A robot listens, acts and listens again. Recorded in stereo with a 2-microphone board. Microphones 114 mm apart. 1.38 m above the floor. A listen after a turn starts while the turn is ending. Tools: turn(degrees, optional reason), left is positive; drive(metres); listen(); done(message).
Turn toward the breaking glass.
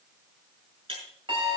turn(degrees=-50, reason="The breaking glass: about 50° right or 130° right.")
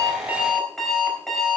listen()
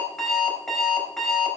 done("I heard breaking glass, but can't make it out now. It was about straight ahead or 80° right.")